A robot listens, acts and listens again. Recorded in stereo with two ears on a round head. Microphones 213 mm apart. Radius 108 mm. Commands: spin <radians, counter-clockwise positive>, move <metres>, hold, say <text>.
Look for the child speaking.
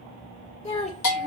spin 0.52
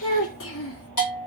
spin 2.01
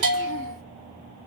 hold
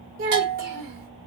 spin -0.70
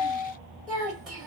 say Found it: a child speaking, straight ahead, 2 to 4 m away.